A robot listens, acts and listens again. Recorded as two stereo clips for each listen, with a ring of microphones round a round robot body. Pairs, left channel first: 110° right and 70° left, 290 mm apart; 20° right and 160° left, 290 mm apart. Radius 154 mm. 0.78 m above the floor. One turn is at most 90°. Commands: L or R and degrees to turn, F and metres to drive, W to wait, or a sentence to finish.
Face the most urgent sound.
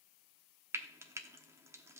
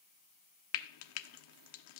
W
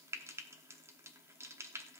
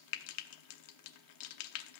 W
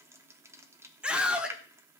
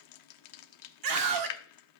L90
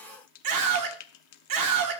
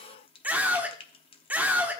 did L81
L75
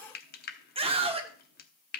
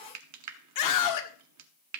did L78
Found it: a scream, straight ahead, 1 to 2 m away.